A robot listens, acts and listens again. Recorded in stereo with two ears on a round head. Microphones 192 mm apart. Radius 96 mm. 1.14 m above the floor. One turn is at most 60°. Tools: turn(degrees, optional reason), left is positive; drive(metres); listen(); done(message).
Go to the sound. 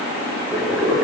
turn(degrees=-30)
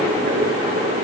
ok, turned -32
turn(degrees=-60, reason="So it is at 145° right.")
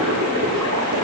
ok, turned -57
turn(degrees=-60, reason="The boiling is now 85° right.")
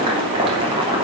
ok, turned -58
turn(degrees=-25, reason="The boiling is now 25° right.")
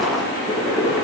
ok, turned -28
drive(metres=1.0)
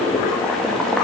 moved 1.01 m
drive(metres=1.0)
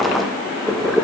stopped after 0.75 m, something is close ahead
done("Arrived at the boiling, straight ahead.")